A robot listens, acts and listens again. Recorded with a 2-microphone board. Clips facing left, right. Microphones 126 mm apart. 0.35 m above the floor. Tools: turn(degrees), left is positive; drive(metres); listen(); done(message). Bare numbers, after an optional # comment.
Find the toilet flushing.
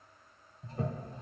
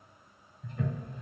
# The toilet flushing: about 35° left or 145° left.
turn(35)
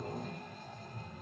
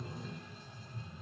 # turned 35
# So it is at 105° left.
turn(105)
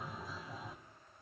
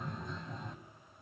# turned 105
done("Facing the toilet flushing.")